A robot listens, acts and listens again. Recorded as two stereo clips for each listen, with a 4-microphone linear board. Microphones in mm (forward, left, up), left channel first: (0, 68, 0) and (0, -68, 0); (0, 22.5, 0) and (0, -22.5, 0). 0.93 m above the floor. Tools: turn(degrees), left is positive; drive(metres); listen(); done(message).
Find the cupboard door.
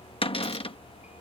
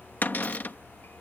turn(degrees=45)
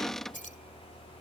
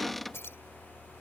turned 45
done("Facing the cupboard door.")